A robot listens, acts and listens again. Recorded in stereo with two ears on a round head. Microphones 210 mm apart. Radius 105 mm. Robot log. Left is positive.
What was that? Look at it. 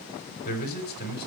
note: The man speaking: about 45° left or 135° left.
cmd yaw +45
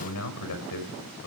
note: So it is at 85° left.
cmd yaw +85
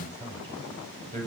note: The man speaking is now 10° left.
cmd yaw +10
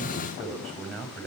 end: Facing the man speaking.